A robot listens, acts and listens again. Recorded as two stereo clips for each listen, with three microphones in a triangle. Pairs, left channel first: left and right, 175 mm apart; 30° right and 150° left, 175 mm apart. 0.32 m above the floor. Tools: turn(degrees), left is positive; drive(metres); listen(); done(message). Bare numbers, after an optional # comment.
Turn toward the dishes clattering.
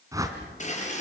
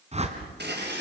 # The dishes clattering: 135° left.
turn(135)
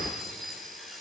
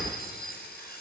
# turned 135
done("Facing the dishes clattering, over 4 m away.")